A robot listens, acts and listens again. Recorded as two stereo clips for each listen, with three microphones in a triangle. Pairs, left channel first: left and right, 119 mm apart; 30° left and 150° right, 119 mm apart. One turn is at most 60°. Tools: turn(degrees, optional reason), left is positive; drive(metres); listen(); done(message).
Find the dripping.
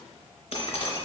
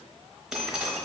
turn(degrees=60, reason="The dripping: 125° left.")
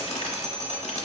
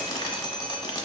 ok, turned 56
turn(degrees=60, reason="The dripping is now 70° left.")
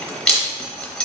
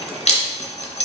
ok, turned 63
done("Facing the dripping.")